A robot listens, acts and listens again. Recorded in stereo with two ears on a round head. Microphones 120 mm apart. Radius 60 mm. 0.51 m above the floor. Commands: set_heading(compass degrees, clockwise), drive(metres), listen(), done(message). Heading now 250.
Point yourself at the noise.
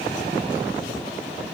listen()
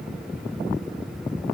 listen()
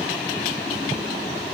done("I can't make out anything.")